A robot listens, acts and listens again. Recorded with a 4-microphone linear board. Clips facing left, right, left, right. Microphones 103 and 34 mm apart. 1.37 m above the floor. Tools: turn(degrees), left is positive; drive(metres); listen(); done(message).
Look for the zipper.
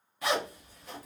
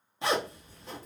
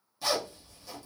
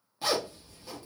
turn(degrees=-25)
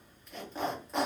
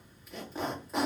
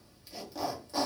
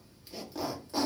done("Facing the zipper.")